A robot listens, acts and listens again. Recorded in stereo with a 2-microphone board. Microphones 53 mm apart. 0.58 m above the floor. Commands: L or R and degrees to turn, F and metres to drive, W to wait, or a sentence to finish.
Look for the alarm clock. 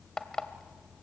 L30
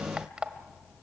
R20
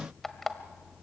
Found it: an alarm clock, straight ahead, 1 to 2 m away.